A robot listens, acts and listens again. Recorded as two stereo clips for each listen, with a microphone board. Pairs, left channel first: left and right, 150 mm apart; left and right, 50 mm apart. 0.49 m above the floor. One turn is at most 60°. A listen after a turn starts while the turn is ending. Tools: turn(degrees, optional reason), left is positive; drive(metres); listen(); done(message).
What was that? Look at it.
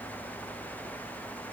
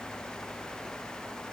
listen()
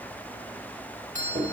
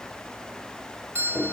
turn(degrees=-55, reason="The doorbell: about 55° right or 125° right.")
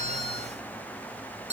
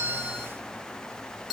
turn(degrees=-15, reason="So it is at 15° right.")
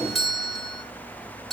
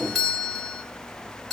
done("Found it: a doorbell, straight ahead.")